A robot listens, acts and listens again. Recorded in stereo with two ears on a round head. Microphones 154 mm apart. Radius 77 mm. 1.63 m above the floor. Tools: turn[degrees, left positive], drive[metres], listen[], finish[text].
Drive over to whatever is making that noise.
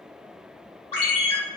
Thought: The ringtone: about 30° left or 150° left.
Action: turn[30]
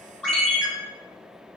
Action: drive[1.0]
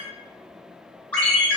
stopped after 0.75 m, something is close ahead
Thought: The ringtone is now 10° left.
Action: turn[10]
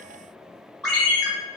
Action: finish[Arrived at the ringtone, straight ahead.]